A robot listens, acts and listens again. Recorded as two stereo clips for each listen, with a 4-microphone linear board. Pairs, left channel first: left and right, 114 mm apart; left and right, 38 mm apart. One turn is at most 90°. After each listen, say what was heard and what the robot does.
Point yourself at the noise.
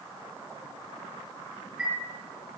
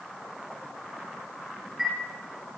Turn 30° right.
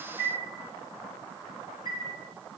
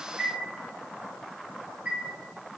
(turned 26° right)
So it is at 145° right. Turn 90° right.
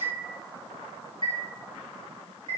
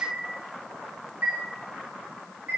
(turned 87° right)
The chime is now 55° right. Turn 55° right.
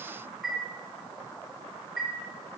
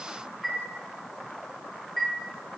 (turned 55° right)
Facing the chime, 1 to 2 m away.